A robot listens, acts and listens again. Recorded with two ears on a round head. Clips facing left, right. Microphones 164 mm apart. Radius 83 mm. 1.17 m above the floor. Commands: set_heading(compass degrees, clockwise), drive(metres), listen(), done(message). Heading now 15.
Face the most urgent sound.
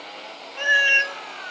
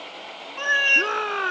set_heading(105)
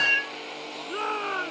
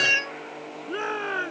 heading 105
set_heading(115)
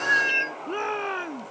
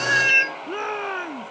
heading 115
done("Found it: a shout, straight ahead.")